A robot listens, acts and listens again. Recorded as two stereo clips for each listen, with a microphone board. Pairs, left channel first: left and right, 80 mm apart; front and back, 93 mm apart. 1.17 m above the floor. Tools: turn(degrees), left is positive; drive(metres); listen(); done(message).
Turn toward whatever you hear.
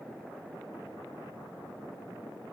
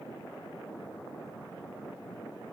listen()
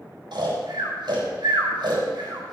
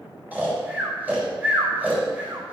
turn(degrees=-105)
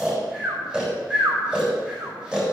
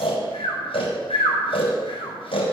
turn(degrees=-10)
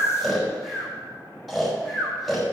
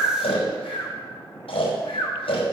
done("Facing the snoring, 2 to 4 m away.")